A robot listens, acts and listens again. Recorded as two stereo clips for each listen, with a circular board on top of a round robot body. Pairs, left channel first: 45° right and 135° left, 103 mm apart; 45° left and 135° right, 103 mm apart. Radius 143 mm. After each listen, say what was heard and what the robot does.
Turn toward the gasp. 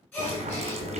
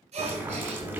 The gasp: 115° right. Turn 115° right.
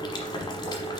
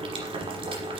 Facing where the gasp came from. I can't hear it now.